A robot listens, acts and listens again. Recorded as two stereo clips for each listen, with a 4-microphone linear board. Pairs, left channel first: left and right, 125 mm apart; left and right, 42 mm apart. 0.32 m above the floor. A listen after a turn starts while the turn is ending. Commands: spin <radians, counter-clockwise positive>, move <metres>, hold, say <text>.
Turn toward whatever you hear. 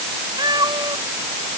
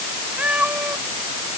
spin -0.61
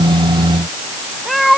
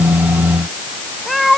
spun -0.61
say Found it: a cat meowing, straight ahead.